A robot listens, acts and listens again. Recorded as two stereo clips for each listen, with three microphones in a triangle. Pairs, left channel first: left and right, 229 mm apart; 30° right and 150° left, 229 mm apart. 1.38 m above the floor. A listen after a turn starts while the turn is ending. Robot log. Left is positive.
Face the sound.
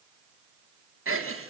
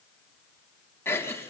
note: The giggle: 110° right.
cmd yaw -110
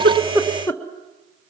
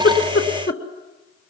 note: The giggle is now 10° left.
cmd yaw +10
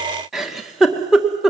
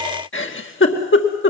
end: Found it: a giggle, straight ahead, 1 to 2 m away.